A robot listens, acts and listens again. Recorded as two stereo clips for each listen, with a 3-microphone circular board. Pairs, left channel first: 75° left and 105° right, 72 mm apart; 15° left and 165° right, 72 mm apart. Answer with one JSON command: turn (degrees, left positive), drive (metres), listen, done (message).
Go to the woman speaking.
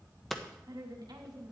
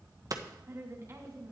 {"turn": -115}
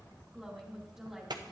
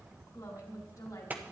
{"turn": -20}
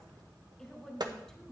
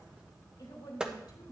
{"drive": 1.0}
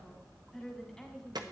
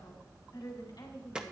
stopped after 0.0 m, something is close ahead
{"done": "Blocked. The woman speaking is further on, straight ahead."}